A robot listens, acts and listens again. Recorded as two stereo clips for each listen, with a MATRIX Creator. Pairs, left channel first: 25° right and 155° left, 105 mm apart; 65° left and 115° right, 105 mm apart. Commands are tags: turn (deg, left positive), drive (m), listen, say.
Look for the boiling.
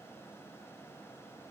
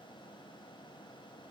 <listen/>
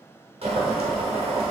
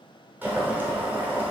<turn deg="175"/>
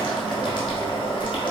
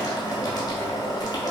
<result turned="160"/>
<turn deg="15"/>
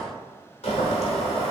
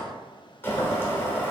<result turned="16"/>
<say>Found it: boiling, straight ahead.</say>